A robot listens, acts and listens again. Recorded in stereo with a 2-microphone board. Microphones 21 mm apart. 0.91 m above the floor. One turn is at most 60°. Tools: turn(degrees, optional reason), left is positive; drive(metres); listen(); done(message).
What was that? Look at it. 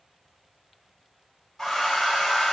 turn(degrees=20, reason="The hair dryer: about 20° left or 160° left.")
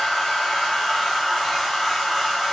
done("Found it: a hair dryer, straight ahead, 1 to 2 m away.")